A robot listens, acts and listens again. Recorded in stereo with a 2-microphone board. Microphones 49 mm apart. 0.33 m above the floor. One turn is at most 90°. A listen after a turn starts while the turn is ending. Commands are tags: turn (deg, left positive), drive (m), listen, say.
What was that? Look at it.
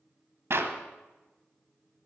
<turn deg="-65"/>
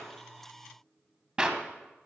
<turn deg="-20"/>
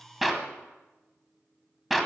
<say>Found it: a clap, straight ahead.</say>